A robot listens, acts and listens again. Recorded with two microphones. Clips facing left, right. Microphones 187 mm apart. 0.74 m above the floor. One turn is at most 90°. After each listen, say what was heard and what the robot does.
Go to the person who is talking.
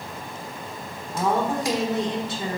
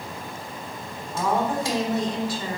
The woman speaking: about 25° left or 155° left. Turn 25° left.
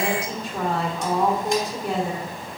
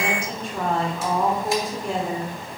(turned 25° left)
Drive 1.0 m forward.
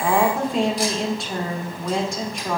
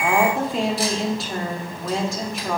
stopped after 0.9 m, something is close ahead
Arrived at the woman speaking, straight ahead.